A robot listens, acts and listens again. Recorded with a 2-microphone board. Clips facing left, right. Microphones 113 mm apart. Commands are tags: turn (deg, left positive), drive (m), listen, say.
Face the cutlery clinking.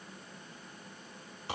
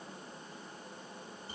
<listen/>
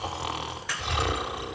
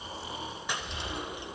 <turn deg="-20"/>
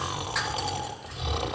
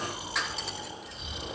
<listen/>
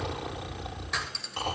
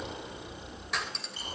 <say>Found it: cutlery clinking, straight ahead, 2 to 4 m away.</say>